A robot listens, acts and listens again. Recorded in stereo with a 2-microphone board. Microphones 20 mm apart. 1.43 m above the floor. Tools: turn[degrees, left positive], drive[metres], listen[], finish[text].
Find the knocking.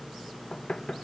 Thought: The knocking: about 45° left or 135° left.
Action: turn[45]
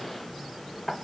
Action: finish[Found it: knocking, straight ahead.]